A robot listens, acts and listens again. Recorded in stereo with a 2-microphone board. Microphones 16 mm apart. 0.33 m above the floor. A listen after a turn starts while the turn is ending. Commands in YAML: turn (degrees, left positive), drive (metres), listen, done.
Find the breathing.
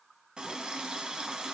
listen: true
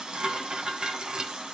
listen: true
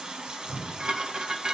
turn: -35
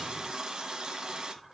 listen: true
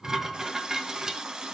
listen: true
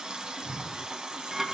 done: "Found it: breathing, straight ahead, 1 to 2 m away."